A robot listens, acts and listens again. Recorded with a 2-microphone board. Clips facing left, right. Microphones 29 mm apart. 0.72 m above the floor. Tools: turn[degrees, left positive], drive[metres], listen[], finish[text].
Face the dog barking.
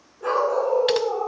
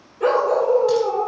Action: turn[-90]
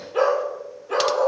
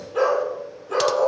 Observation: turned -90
Thought: So it is at 30° left.
Action: turn[30]
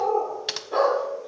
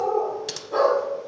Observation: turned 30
Thought: The dog barking is now 20° left.
Action: turn[20]
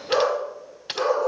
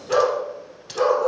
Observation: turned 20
Thought: The dog barking is now 10° left.
Action: turn[10]
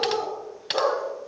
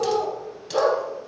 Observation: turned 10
Action: finish[Found it: a dog barking, straight ahead, over 4 m away.]